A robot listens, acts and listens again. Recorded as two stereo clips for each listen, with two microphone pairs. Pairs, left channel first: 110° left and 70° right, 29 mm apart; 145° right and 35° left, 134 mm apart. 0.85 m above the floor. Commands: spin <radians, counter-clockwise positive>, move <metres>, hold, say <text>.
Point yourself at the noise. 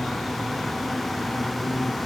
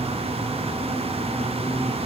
hold
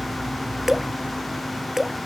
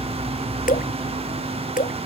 spin -2.62
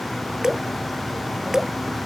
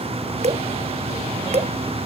say Found it: dripping, straight ahead.